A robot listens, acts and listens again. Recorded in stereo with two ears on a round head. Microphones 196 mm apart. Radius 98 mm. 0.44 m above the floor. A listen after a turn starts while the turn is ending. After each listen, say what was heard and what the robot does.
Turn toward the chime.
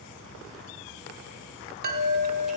The chime: about 45° right or 135° right. Turn 45° right.
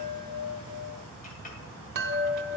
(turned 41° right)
So it is at 80° right. Turn 80° right.
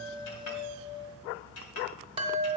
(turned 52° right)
The chime is now 30° right. Turn 30° right.
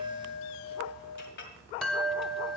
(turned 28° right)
Facing the chime.